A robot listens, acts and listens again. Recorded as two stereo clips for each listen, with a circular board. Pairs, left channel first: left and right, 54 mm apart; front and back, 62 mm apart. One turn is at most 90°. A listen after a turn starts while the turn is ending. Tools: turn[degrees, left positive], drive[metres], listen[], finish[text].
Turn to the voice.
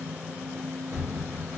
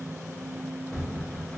Action: listen[]
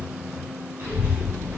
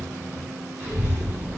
Thought: The child speaking: 115° right.
Action: turn[-90]
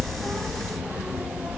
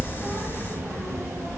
Thought: The child speaking is now 25° right.
Action: turn[-25]
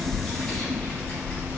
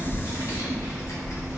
Thought: The child speaking is now 15° left.
Action: turn[15]
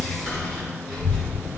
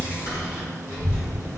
Action: finish[Found it: a child speaking, straight ahead.]